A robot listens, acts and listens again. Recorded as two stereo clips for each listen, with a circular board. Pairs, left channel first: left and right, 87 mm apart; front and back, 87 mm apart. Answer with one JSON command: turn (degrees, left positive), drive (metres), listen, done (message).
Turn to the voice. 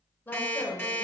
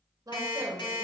{"turn": 155}
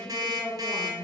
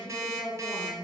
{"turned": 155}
{"done": "Facing the woman speaking."}